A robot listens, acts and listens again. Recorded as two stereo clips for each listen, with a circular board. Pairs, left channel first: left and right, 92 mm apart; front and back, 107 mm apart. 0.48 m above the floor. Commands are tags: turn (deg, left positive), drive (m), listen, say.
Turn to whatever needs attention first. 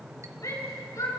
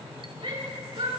<turn deg="140"/>
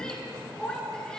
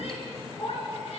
<turn deg="10"/>
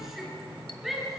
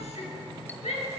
<say>Facing the shout, over 4 m away.</say>